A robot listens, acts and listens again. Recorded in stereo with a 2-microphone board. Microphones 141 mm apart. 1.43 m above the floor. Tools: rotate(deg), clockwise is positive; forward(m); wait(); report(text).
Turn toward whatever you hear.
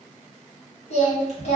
rotate(-50)
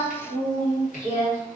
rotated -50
rotate(-75)
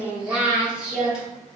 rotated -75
report("Facing the singing, 1 to 2 m away.")